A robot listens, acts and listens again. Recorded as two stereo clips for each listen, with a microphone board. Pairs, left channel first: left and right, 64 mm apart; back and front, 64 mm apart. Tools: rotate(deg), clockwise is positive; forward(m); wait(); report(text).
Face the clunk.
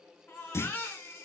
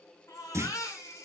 rotate(-45)
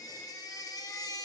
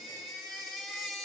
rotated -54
rotate(10)
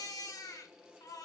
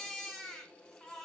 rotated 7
report("I heard a clunk from this way, but can't make it out now.")